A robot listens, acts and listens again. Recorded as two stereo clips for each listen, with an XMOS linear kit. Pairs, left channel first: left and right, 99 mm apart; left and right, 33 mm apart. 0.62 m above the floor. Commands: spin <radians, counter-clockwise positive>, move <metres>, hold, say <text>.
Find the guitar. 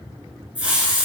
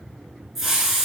hold
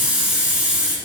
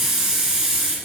hold
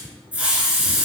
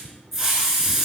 say I can't make out a guitar, only a hiss.